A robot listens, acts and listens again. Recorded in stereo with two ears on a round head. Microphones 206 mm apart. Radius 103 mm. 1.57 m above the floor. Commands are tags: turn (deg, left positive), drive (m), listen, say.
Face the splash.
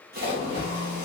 <turn deg="-40"/>
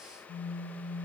<listen/>
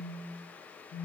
<say>I heard a splash, but can't make it out now. It was about straight ahead or 100° right.</say>